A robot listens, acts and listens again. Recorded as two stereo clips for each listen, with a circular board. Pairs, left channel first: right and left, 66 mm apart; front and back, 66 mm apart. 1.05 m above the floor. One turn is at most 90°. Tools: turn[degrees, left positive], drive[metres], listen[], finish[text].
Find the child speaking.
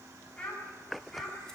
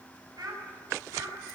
Thought: The child speaking: 170° right.
Action: turn[-90]
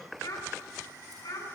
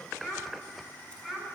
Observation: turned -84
Thought: The child speaking is now 95° right.
Action: turn[-90]
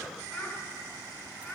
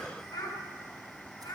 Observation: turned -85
Thought: The child speaking is now 15° right.
Action: turn[-15]
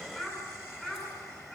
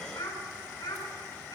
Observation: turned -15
Action: finish[Facing the child speaking.]